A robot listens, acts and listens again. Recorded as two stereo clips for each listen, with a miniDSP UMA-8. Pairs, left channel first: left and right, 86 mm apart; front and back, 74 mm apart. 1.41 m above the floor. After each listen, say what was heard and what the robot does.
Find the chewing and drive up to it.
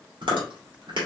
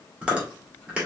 The chewing: 105° right. Turn 105° right.
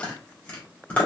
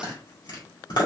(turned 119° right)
The chewing is now 15° left. Turn 15° left.
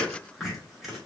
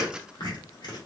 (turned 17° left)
Drive 1.0 m forward.
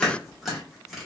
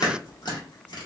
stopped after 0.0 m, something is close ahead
Something is in my way. I am facing the chewing but have not reached it.